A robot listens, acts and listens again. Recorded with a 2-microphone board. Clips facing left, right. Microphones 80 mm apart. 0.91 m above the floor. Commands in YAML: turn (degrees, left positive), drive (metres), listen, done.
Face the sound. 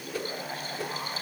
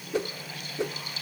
turn: -25
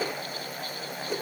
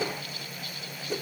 done: "Facing the whoosh, 1 to 2 m away."